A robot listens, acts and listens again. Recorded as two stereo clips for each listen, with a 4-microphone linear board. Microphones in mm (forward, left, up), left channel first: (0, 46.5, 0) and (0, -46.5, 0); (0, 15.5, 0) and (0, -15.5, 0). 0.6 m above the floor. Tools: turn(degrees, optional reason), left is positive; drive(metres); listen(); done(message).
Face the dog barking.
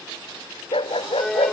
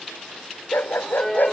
turn(degrees=90)
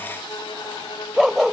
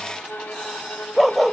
done("Found it: a dog barking, straight ahead.")